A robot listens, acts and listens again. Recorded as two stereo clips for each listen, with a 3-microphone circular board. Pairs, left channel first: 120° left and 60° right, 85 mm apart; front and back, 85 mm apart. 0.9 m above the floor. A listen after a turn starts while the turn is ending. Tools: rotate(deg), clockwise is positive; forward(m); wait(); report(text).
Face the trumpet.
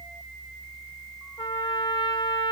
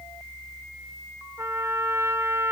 rotate(-125)
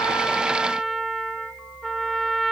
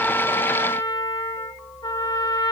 rotate(-30)
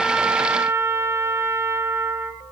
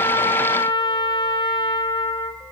report("Found it: a trumpet, straight ahead, 1 to 2 m away.")